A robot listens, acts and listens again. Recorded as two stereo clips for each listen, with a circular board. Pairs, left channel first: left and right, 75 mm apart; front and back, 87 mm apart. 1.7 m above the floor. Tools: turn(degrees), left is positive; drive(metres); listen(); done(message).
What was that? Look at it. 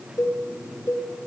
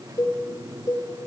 turn(degrees=40)
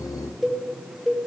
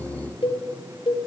done("Facing the cowbell, 1 to 2 m away.")